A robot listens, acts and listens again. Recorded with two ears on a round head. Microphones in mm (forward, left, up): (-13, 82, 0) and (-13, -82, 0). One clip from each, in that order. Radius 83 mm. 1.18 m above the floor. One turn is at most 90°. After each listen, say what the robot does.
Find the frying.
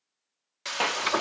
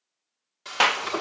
Turn 45° left.
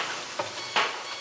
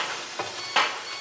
Turn 10° left.
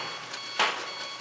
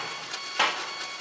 Facing the frying.